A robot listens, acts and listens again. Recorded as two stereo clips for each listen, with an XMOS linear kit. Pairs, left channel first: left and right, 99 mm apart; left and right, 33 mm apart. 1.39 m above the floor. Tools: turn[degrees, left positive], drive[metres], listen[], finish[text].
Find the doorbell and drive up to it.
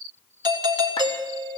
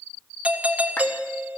Thought: The doorbell: about 45° right or 135° right.
Action: turn[-45]
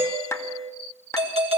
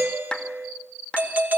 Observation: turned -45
Thought: So it is at 90° right.
Action: turn[-90]
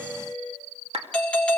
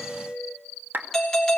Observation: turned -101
Thought: The doorbell is now 10° left.
Action: turn[10]
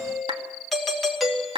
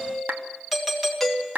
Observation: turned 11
Action: drive[1.0]
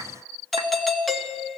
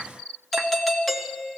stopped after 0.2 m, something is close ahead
Action: finish[Something is in my way. I am facing the doorbell but have not reached it.]